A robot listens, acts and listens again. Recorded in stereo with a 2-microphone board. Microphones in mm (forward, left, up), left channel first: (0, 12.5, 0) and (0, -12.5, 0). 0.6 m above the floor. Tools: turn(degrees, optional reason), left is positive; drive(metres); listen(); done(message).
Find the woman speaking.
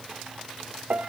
listen()
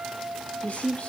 turn(degrees=60, reason="The woman speaking: about 60° left or 120° left.")
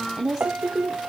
turn(degrees=-25, reason="So it is at 25° right.")
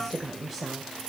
turn(degrees=-15, reason="The woman speaking is now 15° right.")
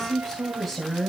turn(degrees=-10, reason="The woman speaking is now 10° right.")
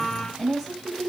done("Facing the woman speaking.")